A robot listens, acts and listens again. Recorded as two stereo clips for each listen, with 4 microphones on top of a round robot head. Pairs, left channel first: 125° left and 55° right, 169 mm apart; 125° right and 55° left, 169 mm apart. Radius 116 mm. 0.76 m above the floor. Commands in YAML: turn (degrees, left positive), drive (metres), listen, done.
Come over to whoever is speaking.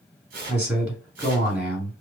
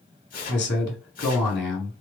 turn: -140
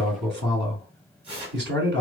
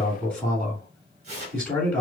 turn: -45
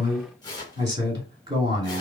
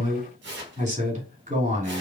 drive: 1.0
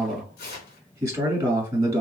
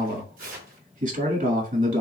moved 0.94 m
turn: 10
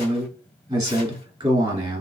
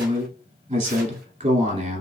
drive: 1.0
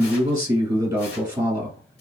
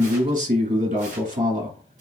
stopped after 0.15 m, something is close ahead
turn: 10
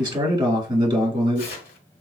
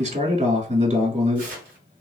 done: "I am next to the man speaking."